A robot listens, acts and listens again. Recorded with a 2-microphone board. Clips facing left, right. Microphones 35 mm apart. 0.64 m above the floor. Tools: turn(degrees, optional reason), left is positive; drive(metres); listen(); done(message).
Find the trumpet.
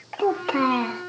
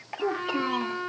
turn(degrees=-30, reason="The trumpet: about 30° right or 150° right.")
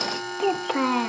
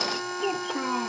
done("Found it: a trumpet, straight ahead, 1 to 2 m away.")